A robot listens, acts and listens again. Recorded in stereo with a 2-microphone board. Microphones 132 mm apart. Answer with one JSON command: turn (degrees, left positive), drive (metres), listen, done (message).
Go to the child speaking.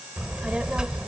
{"turn": -30}
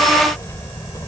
{"turn": 25}
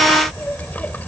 {"turn": 10}
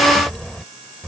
{"drive": 1.0}
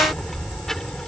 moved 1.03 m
{"drive": 1.0}
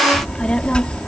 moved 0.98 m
{"drive": 1.0}
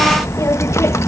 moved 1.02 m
{"turn": 25}
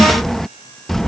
{"drive": 1.0}
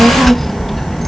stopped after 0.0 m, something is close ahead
{"done": "Arrived at the child speaking, straight ahead."}